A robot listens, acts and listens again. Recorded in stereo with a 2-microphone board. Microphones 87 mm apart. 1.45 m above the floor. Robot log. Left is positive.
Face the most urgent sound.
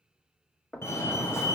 note: The fire alarm: about 30° left or 150° left.
cmd yaw +30
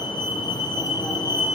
note: So it is at 115° left.
cmd yaw +115
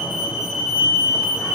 note: The fire alarm is now 10° right.
cmd yaw -10
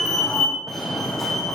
end: Found it: a fire alarm, straight ahead.